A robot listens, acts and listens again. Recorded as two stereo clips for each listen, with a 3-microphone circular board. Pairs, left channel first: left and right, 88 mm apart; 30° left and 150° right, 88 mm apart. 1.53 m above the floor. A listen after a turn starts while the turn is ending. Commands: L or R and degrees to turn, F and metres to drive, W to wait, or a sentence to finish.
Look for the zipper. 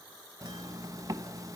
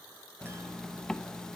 R55
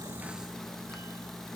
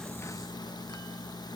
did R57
Found it: a zipper, straight ahead, 1 to 2 m away.